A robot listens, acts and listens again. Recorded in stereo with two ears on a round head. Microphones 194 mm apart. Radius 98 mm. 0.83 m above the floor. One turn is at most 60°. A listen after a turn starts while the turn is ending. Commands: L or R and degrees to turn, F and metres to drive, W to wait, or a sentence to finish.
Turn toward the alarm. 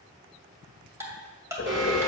R60
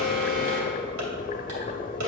R60
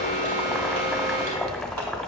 R15
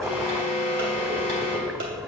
R10
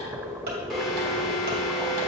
Facing the alarm.